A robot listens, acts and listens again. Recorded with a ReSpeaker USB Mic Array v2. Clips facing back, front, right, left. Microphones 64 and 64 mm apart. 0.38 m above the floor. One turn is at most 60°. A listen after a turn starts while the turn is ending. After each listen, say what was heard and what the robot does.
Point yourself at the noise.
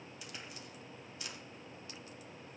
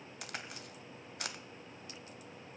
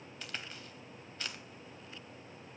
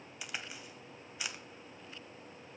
The crack: 10° left. Turn 10° left.
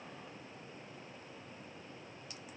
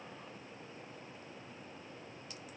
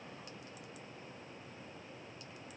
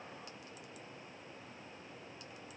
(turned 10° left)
Facing where the crack came from. I can't hear it now.